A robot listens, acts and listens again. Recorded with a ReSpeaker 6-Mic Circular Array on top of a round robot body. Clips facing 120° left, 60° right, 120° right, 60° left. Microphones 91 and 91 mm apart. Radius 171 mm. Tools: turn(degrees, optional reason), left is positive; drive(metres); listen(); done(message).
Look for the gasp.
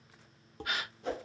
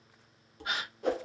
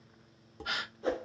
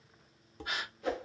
turn(degrees=-125, reason="The gasp: 125° right.")
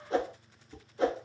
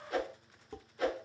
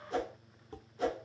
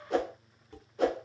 done("I heard a gasp from this way, but can't make it out now.")